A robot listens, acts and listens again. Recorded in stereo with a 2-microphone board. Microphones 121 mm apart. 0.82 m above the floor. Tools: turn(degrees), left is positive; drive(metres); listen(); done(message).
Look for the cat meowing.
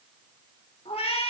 turn(degrees=50)
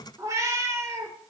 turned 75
turn(degrees=-25)
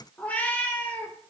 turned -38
turn(degrees=15)
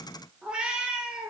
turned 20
turn(degrees=-10)
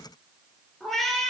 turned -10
done("Facing the cat meowing.")